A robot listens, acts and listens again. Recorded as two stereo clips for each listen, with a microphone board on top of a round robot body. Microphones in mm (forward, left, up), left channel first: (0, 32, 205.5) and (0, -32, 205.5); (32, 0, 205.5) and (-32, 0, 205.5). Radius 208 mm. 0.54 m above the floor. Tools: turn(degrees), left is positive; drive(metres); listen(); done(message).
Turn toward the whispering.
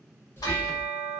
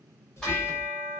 turn(degrees=40)
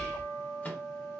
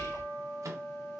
turn(degrees=15)
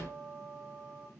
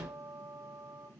listen()
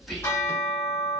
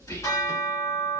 done("Facing the whispering, 1 to 2 m away.")